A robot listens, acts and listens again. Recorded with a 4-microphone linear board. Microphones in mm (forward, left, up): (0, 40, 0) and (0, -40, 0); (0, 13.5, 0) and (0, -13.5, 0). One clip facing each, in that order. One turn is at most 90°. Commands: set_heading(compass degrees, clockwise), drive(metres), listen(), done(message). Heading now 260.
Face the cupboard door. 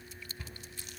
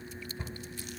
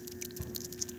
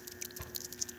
set_heading(285)
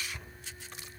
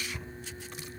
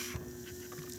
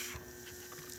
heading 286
done("Facing the cupboard door, 2 to 4 m away.")